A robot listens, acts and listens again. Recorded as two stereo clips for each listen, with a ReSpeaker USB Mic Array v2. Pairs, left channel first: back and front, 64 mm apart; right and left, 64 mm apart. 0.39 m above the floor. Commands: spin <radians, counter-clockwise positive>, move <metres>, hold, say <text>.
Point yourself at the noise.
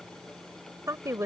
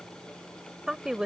spin 0.35
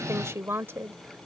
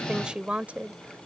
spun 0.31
spin 0.61
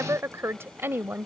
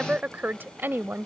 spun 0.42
spin 0.79
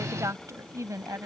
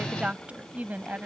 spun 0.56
spin 0.52
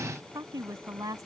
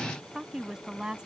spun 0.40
spin 0.26
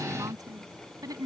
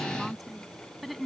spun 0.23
say Facing the woman speaking.